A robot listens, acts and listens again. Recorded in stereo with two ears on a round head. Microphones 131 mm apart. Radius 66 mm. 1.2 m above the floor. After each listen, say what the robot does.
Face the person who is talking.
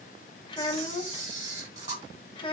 Turn 35° left.
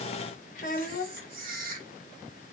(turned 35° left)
Turn 105° left.
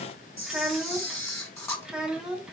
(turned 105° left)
Found it: a child speaking, straight ahead.